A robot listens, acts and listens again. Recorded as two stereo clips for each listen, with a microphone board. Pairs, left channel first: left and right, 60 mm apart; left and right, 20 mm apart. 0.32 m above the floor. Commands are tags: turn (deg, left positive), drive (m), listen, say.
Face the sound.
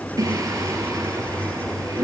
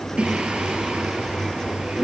<turn deg="-90"/>
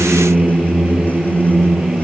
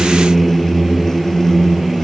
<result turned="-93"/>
<turn deg="-10"/>
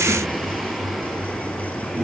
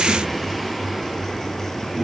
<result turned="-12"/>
<listen/>
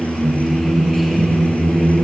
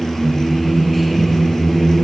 <say>Facing the singing.</say>